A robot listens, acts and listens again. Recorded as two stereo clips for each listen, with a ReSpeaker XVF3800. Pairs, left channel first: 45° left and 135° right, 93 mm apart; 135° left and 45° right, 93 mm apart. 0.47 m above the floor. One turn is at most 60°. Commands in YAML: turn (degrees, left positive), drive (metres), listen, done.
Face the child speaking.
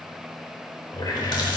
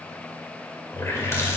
listen: true
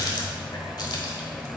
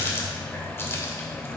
listen: true
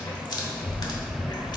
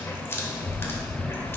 turn: 10
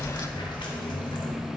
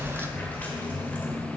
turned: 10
turn: 15
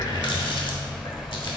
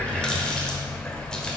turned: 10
turn: 30
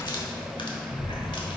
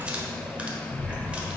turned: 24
done: "Facing the child speaking, 1 to 2 m away."